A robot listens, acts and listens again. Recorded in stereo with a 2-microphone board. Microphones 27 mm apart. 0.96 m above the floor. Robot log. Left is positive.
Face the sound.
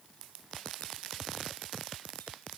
cmd idle
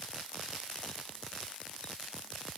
cmd idle
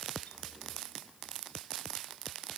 end: I can't make out anything.